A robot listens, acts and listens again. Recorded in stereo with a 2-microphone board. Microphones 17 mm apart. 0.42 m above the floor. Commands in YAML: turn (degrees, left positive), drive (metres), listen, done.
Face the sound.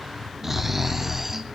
turn: -20
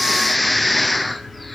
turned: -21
done: "Facing the snoring, under 1 m away."